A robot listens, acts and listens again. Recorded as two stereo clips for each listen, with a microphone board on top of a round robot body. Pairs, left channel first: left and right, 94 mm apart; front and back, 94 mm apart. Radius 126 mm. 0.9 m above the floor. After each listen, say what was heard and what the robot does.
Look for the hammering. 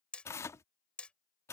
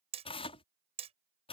The hammering: 170° left. Turn 170° left.
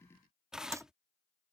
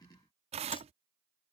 Keep listening.
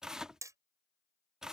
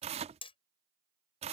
The hammering is now 30° right. Turn 30° right.
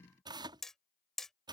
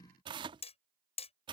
Found it: hammering, straight ahead.